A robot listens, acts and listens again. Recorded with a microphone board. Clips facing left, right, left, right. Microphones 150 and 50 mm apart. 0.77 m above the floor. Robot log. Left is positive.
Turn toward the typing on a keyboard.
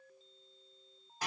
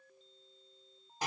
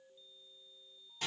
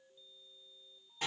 cmd idle
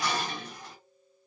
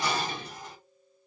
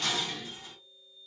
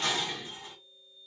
cmd idle
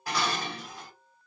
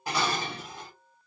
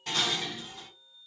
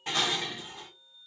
end: I can't make out typing on a keyboard, only dishes clattering.